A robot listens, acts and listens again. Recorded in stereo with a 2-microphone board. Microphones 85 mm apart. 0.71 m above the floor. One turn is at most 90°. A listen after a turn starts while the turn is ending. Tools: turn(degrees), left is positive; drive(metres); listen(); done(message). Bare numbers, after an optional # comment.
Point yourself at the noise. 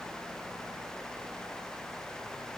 listen()
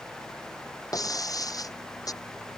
# The breaking glass: about 50° left or 130° left.
turn(50)
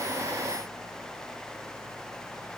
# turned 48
listen()
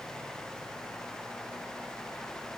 done("I heard breaking glass, but can't make it out now. It was about straight ahead or 85° left.")